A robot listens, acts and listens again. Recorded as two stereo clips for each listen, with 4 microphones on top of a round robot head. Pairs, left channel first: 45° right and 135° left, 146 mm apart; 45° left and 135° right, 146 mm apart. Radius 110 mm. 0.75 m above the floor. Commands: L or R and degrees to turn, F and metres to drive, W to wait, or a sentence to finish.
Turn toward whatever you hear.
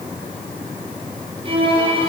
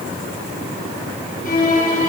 L80
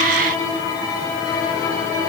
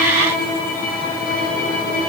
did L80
L20
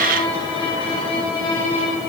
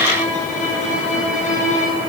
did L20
L10
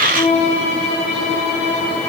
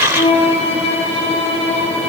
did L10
Facing the violin.